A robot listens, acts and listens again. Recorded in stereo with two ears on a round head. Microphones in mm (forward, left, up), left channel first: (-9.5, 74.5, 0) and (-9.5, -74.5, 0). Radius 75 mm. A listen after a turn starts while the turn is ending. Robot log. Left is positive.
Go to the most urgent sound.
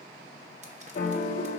cmd idle
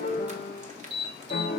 note: The alarm: about 60° right or 120° right.
cmd yaw -60
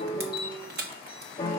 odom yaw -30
cmd idle
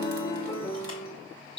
note: So it is at 30° right.
cmd yaw -30
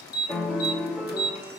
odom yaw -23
cmd fwd 1.0
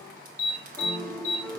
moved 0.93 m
note: The alarm is now 10° right.
cmd yaw -10
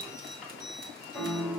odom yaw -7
cmd idle
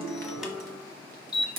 cmd fwd 1.0
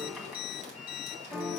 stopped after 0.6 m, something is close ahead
cmd idle
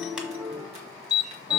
end: I am next to the alarm.